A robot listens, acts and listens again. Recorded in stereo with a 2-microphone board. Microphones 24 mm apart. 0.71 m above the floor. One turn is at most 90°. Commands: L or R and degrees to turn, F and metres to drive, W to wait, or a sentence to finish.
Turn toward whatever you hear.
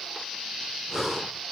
R30
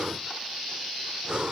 R90
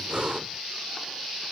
R50
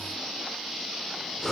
L15
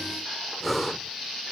Found it: breathing, straight ahead.